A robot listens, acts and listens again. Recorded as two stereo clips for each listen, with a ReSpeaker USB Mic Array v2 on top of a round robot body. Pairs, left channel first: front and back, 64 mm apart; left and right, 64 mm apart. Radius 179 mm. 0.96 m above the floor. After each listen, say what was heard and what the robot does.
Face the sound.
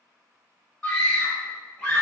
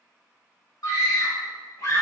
The scream: 80° left. Turn 80° left.
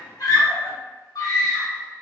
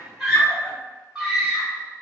Facing the scream.